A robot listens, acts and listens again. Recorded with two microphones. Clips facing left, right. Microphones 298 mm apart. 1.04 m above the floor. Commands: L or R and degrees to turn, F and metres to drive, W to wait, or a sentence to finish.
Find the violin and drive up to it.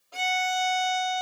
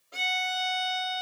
R25
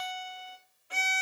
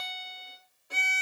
R130
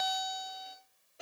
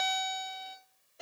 F1.0
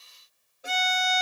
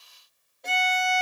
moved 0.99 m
F1.0
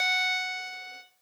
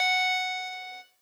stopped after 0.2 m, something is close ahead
L10
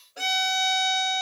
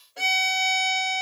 Arrived at the violin, straight ahead.